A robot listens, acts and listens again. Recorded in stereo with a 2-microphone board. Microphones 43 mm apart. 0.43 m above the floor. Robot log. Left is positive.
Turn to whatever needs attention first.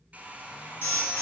note: The alarm: about 65° left or 115° left.
cmd yaw +65
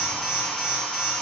end: Facing the alarm, 2 to 4 m away.